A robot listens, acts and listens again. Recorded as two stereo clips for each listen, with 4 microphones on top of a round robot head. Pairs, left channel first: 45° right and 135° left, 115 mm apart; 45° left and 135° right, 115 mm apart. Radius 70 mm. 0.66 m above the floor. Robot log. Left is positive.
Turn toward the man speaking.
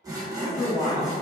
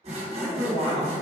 note: The man speaking: 15° left.
cmd yaw +15
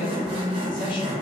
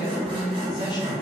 end: Facing the man speaking, 1 to 2 m away.